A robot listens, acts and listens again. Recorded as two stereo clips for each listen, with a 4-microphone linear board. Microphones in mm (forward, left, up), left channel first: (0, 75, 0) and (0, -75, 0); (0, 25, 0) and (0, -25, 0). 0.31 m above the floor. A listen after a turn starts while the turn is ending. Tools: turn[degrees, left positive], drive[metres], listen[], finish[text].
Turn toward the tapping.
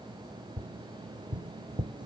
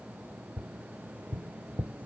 Thought: The tapping: about 35° right or 145° right.
Action: turn[-35]
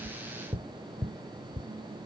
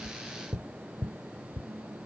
Action: finish[Found it: tapping, straight ahead.]